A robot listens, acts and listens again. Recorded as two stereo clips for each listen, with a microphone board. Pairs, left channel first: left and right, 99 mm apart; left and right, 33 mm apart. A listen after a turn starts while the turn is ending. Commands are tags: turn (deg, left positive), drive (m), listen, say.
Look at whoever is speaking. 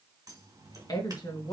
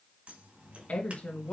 <turn deg="45"/>
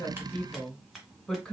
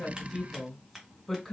<turn deg="15"/>
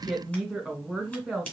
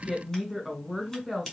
<say>Found it: a woman speaking, straight ahead.</say>